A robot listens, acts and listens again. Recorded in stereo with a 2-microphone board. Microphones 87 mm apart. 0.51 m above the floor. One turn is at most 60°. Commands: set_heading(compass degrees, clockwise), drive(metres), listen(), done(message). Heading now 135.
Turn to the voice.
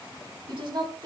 set_heading(195)
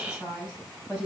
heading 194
set_heading(209)
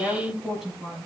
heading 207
done("Facing the woman speaking, over 4 m away.")